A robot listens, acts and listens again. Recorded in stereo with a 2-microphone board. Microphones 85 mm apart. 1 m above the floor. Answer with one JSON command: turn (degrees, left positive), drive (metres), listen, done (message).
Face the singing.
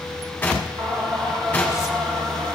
{"turn": -60}
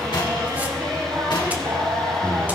{"turn": -50}
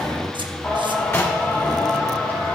{"turn": 25}
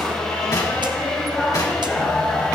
{"turn": 10}
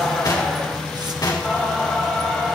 {"done": "Facing the singing, 2 to 4 m away."}